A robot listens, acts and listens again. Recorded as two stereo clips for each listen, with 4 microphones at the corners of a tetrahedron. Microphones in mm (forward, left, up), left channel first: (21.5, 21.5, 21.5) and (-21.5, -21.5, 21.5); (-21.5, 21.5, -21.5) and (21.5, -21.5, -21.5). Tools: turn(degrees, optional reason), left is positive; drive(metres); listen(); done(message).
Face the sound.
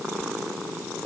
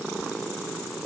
listen()
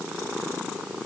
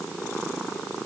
listen()
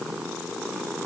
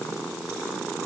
done("I can't make out anything.")